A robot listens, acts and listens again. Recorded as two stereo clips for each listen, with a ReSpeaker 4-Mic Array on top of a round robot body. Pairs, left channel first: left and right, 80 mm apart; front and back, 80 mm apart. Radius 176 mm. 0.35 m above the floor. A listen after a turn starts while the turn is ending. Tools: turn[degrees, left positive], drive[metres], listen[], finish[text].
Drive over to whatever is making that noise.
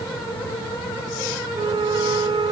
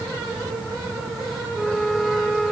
Thought: The flute: 90° right.
Action: turn[-90]
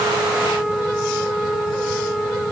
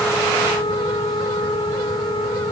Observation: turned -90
Action: drive[1.0]
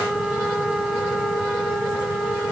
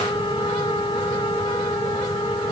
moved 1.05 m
Action: drive[1.0]
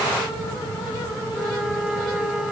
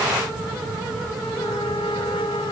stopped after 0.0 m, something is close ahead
Thought: The flute is now 10° right.
Action: turn[-10]
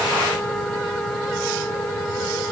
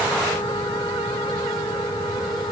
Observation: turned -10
Action: listen[]
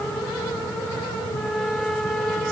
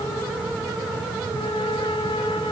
Action: finish[Something is in my way. I am facing the flute but have not reached it.]